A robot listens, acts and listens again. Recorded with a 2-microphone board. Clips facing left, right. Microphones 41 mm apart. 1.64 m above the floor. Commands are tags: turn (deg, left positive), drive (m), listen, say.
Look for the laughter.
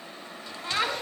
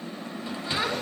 <turn deg="90"/>
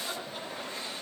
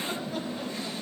<listen/>
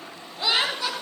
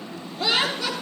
<say>Facing the laughter.</say>